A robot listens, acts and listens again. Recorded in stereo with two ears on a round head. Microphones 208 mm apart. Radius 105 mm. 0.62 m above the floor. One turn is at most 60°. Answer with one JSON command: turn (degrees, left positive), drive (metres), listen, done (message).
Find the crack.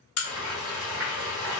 {"turn": 60}
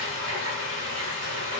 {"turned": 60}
{"listen": true}
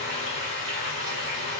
{"done": "I heard a crack, but can't make it out now. It was about straight ahead or 60° left."}